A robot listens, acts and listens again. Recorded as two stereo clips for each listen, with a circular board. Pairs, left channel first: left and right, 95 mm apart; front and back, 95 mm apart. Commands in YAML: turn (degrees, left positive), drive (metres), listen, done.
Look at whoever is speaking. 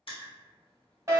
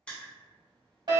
listen: true
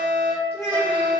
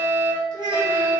turn: 145
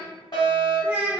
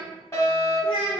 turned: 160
turn: -15
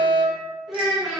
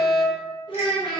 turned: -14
done: "Found it: a child speaking, straight ahead, 1 to 2 m away."